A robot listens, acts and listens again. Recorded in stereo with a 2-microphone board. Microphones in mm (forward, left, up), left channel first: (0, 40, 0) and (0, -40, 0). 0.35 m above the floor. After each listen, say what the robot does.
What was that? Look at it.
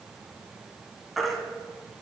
Turn 30° left.
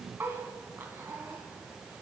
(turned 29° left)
Keep listening.
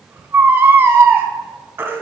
Turn 30° right.
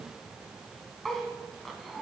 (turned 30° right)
Keep listening.
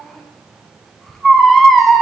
Facing the baby crying, under 1 m away.